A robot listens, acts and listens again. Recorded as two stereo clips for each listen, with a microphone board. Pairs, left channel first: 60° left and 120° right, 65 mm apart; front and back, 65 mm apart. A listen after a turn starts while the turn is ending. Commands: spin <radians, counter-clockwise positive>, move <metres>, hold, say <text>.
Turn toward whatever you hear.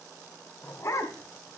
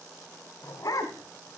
spin 0.44
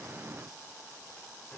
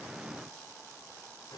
hold
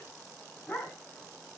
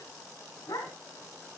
say Facing the dog barking.